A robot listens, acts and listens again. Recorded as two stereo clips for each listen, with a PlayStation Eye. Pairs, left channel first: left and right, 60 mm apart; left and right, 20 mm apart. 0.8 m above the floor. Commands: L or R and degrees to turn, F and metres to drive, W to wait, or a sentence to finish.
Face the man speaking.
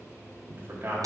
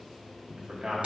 R35
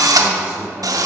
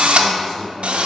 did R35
R15
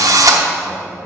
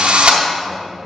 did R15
R15
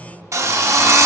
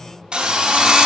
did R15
W
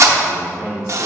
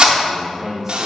R15
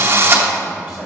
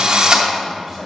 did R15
Facing the man speaking.